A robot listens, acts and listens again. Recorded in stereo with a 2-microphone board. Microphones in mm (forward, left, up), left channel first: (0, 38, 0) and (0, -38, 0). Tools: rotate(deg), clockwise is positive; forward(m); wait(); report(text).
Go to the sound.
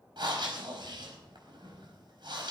rotate(75)
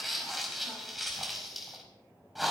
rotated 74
forward(1.0)
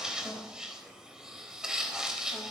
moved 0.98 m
rotate(10)
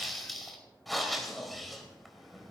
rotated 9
forward(1.0)
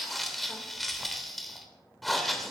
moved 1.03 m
forward(1.0)
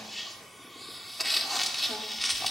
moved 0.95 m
forward(1.0)
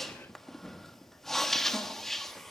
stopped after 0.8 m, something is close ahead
report("I am next to the breathing.")